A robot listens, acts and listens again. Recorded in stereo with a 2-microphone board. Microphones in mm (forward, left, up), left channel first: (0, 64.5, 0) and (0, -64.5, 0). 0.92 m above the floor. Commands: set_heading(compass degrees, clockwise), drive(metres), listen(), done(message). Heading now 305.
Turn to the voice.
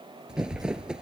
set_heading(340)
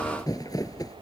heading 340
listen()
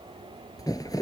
listen()
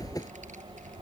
set_heading(85)
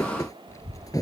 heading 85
set_heading(60)
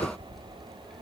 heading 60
done("Facing the child speaking.")